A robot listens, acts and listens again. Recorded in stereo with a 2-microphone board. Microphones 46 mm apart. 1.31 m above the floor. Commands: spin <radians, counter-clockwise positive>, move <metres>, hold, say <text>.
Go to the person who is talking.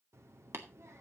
spin -1.31
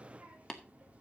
spin -0.52
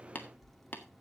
move 1.0
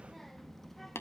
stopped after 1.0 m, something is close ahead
say I am next to the child speaking.